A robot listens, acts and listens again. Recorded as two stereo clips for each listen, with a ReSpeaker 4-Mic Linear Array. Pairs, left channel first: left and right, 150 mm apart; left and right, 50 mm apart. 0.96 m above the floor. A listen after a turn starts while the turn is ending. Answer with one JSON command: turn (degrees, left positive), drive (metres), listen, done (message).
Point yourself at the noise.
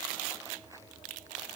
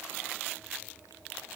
{"listen": true}
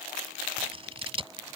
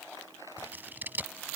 {"turn": -40}
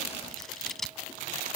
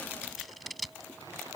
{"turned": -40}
{"done": "Found it: scissors, straight ahead."}